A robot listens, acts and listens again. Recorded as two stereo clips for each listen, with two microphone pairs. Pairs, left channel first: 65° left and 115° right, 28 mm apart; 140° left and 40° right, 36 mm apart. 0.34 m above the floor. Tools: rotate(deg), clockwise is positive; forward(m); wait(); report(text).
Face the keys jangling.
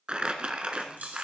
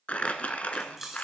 rotate(120)
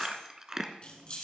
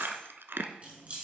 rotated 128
rotate(-10)
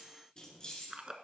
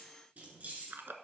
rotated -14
report("Found it: keys jangling, straight ahead.")